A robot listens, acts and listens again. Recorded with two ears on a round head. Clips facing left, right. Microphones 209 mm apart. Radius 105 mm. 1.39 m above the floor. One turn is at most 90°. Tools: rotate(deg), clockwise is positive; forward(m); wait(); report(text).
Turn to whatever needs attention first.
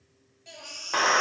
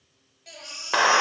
rotate(-30)
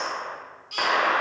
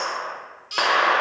rotate(25)
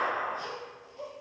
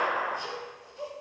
wait()
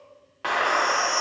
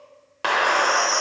rotate(15)
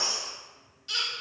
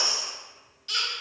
report("Found it: a baby crying, straight ahead, 1 to 2 m away.")